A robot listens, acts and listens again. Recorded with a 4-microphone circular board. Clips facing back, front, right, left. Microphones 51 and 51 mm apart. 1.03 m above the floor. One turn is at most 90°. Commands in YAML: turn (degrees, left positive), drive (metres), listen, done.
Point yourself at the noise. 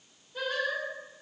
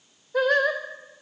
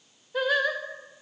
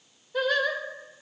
turn: -10
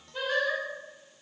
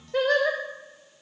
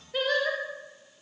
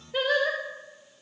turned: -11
done: "Facing the singing."